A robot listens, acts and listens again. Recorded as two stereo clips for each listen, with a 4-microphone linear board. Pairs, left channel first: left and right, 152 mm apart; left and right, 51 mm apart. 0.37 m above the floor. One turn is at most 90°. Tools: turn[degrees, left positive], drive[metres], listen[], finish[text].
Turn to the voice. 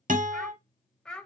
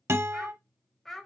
Action: turn[30]
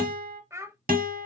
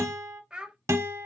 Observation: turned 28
Thought: So it is at 20° right.
Action: turn[-20]
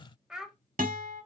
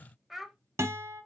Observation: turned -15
Action: finish[Found it: a child speaking, straight ahead, under 1 m away.]